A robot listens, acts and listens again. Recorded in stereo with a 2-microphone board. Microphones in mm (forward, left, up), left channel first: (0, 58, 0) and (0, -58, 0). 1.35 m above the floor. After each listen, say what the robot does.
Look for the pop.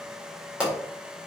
Turn 30° right.
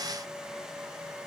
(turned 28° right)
Keep listening.
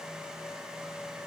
I heard a pop, but can't make it out now. It was about 20° left or 145° right.